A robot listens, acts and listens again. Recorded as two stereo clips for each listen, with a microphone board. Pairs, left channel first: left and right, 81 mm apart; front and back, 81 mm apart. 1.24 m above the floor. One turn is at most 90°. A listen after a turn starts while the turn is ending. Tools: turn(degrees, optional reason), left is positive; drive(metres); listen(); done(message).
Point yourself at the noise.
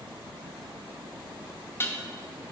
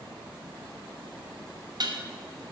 turn(degrees=90, reason="The dishes clattering: 150° left.")
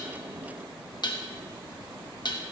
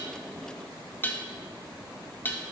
turn(degrees=65, reason="The dishes clattering is now 65° left.")
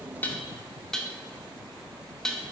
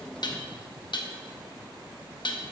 turn(degrees=10, reason="The dishes clattering is now 10° left.")
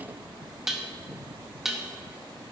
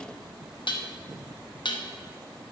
done("Facing the dishes clattering.")